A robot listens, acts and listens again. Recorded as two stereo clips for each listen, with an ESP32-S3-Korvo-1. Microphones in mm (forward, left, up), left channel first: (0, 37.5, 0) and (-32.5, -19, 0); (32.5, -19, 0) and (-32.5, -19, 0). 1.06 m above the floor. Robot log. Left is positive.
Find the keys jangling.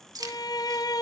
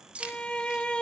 note: The keys jangling: 110° right.
cmd yaw -110
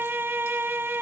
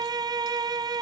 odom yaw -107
cmd idle
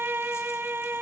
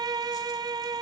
cmd idle
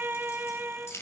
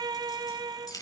note: The keys jangling is now 15° left.
cmd yaw +15
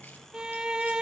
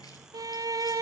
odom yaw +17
cmd idle
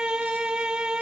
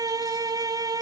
cmd idle
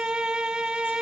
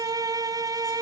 end: I heard keys jangling from this way, but can't make it out now.